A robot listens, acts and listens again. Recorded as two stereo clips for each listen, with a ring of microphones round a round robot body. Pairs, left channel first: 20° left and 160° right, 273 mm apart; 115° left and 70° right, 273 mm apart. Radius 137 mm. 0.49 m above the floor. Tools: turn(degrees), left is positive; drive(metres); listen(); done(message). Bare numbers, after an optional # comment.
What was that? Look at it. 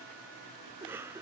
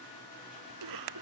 # The cough: 75° right.
turn(-75)
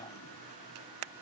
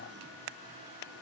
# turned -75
listen()
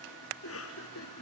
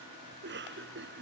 # The cough is now 15° right.
turn(-15)
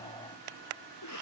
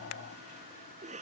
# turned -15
done("Found it: a cough, straight ahead.")